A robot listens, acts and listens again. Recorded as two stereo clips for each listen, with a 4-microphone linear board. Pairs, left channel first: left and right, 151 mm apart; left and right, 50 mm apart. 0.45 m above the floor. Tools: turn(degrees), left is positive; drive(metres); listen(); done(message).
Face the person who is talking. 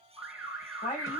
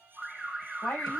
turn(degrees=35)
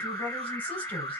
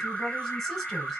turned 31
turn(degrees=10)
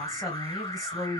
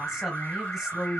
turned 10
done("Facing the woman speaking, 2 to 4 m away.")